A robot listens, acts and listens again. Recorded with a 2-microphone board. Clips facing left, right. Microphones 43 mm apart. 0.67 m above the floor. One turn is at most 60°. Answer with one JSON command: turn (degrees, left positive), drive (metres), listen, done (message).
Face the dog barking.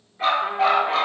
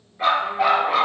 {"turn": -30}
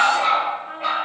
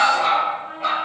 {"turn": 10}
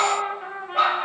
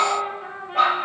{"done": "Facing the dog barking, over 4 m away."}